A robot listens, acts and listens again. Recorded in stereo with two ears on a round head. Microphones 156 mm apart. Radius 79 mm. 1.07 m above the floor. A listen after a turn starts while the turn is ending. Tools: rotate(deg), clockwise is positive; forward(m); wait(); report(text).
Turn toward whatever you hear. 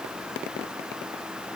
wait()
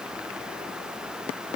wait()
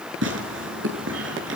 rotate(90)
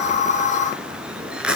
report("Facing the tearing paper, over 4 m away.")